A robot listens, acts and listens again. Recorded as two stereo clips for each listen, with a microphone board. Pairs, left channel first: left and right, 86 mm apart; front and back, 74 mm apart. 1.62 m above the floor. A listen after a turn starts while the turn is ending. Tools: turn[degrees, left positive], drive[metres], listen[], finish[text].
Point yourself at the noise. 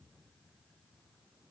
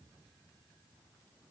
Action: listen[]
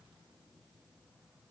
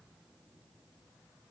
Action: listen[]
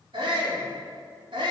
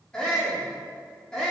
Thought: The shout: 80° right.
Action: turn[-80]
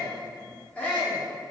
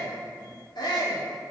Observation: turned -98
Thought: The shout is now 20° left.
Action: turn[20]
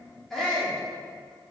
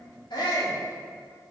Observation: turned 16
Action: finish[Facing the shout, 2 to 4 m away.]